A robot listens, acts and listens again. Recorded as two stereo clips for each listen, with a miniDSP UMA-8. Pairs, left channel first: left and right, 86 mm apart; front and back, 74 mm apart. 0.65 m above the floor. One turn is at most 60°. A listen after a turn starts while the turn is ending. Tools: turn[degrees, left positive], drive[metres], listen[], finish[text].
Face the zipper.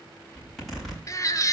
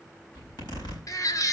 Action: finish[Found it: a zipper, straight ahead, over 4 m away.]